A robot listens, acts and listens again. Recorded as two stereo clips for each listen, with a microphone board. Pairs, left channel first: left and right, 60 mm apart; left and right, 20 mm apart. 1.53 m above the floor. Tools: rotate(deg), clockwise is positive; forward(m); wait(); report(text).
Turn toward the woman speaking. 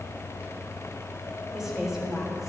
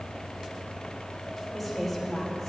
rotate(30)
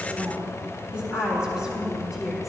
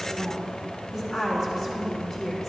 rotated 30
rotate(30)
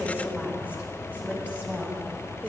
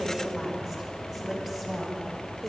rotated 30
rotate(160)
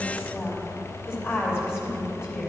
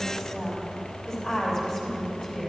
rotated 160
rotate(-40)
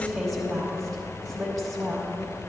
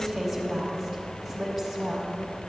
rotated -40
report("Found it: a woman speaking, straight ahead, 2 to 4 m away.")